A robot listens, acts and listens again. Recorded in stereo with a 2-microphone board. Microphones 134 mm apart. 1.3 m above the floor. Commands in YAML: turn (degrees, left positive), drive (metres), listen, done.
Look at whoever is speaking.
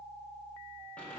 listen: true
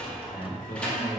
turn: 90
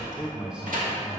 done: "Found it: a man speaking, straight ahead, 1 to 2 m away."